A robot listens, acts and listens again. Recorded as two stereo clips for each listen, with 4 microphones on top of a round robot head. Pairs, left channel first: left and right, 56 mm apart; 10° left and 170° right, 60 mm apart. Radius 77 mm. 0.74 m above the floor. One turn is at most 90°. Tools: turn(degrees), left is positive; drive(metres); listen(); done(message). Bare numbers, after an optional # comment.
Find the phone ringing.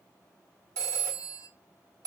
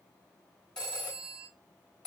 # The phone ringing: 70° right.
turn(-70)
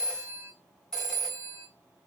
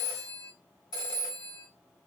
# The phone ringing is now 10° left.
turn(10)
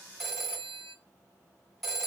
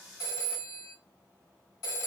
done("Facing the phone ringing.")